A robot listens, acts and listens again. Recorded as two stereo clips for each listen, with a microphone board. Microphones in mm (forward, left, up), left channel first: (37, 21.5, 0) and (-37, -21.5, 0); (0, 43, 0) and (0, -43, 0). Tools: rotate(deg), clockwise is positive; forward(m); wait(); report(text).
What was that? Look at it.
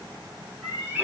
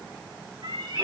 rotate(85)
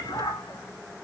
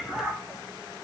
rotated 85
rotate(15)
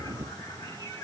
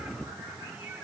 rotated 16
wait()
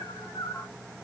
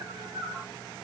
rotate(30)
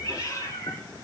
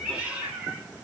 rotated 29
rotate(20)
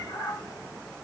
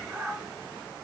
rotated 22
report("Found it: a cat meowing, straight ahead.")